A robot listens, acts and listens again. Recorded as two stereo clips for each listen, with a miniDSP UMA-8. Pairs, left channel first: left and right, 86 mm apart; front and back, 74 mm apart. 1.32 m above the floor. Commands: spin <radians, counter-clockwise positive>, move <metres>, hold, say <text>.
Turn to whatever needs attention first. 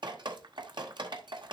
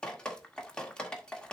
hold
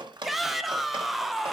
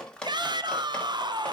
spin 3.14
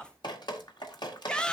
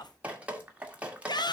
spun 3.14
spin 0.17
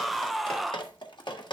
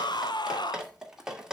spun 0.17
say Found it: a shout, straight ahead.